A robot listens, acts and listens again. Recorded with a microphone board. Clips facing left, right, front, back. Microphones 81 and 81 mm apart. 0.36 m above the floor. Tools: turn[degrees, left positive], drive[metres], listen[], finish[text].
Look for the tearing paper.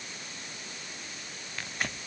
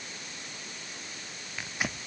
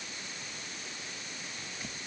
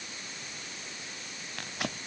Thought: The tearing paper: 175° right.
Action: turn[-175]
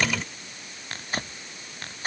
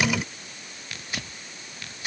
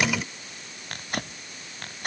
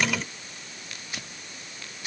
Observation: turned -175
Thought: The tearing paper is now 35° left.
Action: turn[35]
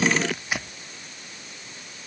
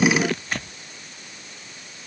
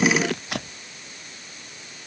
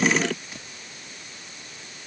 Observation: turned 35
Thought: The tearing paper is now 10° left.
Action: turn[10]
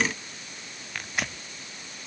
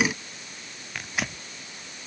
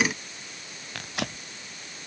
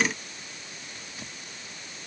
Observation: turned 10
Action: finish[Found it: tearing paper, straight ahead.]